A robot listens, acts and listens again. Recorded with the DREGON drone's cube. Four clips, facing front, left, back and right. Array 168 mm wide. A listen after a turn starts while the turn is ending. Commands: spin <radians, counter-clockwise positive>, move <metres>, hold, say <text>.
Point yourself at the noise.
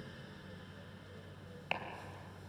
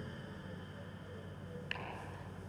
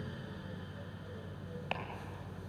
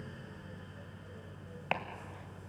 spin -1.75
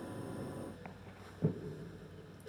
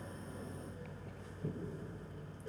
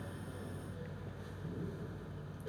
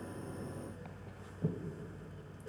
spin -0.35
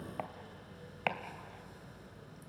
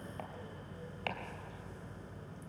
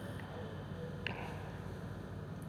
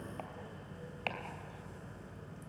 hold
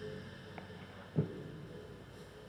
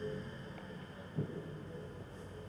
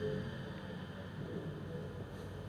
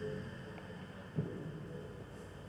say Facing the chopping.